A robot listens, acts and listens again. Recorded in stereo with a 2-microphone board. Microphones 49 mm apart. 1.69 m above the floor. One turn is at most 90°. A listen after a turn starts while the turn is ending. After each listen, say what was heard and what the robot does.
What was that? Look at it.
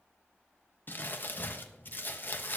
The crumpling: about 40° left or 140° left. Turn 40° left.
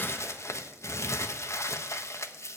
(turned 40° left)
So it is at 100° left. Turn 90° left.
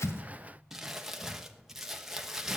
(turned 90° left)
The crumpling is now 10° right. Turn 10° right.
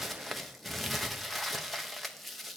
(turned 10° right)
Facing the crumpling.